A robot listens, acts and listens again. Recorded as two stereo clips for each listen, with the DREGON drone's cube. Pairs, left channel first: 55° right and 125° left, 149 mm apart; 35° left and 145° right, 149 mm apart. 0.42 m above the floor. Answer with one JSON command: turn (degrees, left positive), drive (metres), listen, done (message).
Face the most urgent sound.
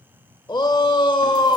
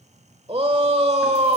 {"turn": -110}
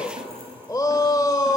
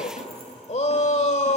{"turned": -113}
{"done": "Found it: a shout, straight ahead."}